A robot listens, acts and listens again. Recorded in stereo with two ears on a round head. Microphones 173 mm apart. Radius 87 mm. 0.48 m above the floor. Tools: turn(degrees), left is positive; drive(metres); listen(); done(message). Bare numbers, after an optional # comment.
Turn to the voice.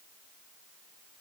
listen()
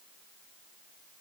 listen()
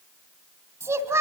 turn(-30)
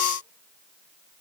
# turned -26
listen()
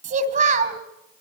# So it is at 140° right.
turn(-140)
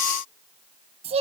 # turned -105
# The child speaking is now 35° right.
turn(-35)
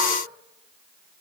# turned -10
# Nothing new. It was at 25° right.
turn(-25)
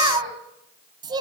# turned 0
# The child speaking is now 25° right.
turn(-25)
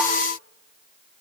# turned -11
# Nothing new. It was at 10° right.
turn(-10)
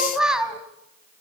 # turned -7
done("Found it: a child speaking, straight ahead, 2 to 4 m away.")